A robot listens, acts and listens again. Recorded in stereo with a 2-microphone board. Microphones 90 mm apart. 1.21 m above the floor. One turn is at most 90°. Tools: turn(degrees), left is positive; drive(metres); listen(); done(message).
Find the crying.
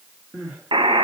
turn(degrees=-30)
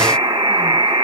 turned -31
listen()
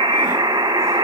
listen()
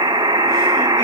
done("I heard crying, but can't make it out now. It was about 25° left or 145° right.")